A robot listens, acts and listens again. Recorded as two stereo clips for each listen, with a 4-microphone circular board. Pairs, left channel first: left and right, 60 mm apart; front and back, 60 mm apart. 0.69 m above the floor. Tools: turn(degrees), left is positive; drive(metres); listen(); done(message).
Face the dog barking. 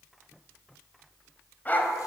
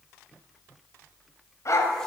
turn(degrees=30)
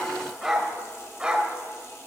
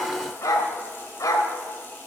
turn(degrees=-20)
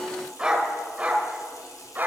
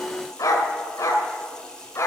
turn(degrees=-30)
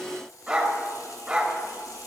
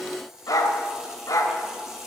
turn(degrees=-15)
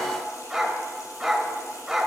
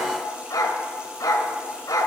done("Facing the dog barking, 1 to 2 m away.")